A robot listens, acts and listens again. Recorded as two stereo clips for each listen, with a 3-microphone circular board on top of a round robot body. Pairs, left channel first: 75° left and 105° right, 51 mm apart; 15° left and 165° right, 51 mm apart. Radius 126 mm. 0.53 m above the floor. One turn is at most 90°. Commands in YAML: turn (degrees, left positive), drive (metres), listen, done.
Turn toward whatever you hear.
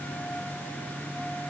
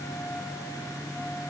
listen: true
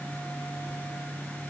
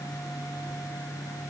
listen: true
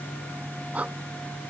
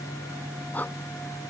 turn: -40
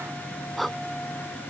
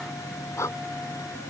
turn: -15
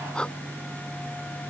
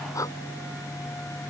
done: "Found it: breathing, straight ahead."